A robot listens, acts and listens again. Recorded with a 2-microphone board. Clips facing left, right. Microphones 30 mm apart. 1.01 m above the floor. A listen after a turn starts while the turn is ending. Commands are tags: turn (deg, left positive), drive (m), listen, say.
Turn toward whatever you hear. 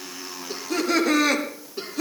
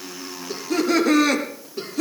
<turn deg="30"/>
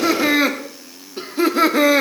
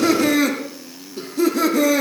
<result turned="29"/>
<turn deg="140"/>
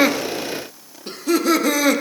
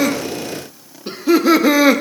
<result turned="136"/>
<turn deg="-25"/>
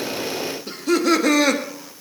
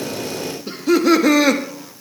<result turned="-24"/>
<say>Found it: laughter, straight ahead.</say>